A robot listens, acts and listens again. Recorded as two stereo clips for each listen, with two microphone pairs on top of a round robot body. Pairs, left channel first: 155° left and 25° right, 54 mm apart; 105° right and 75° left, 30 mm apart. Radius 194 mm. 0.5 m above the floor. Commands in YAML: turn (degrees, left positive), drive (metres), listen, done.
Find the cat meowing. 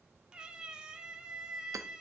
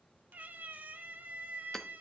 turn: 50
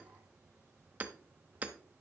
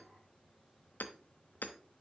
listen: true
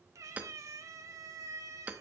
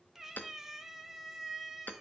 done: "Facing the cat meowing."